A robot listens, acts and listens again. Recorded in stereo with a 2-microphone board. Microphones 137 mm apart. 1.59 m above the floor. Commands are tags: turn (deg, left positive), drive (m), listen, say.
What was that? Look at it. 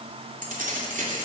<turn deg="-75"/>
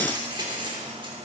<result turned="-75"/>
<turn deg="-35"/>
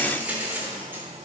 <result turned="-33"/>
<turn deg="-15"/>
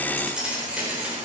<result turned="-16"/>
<turn deg="-10"/>
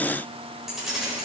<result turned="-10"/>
<say>Facing the keys jangling.</say>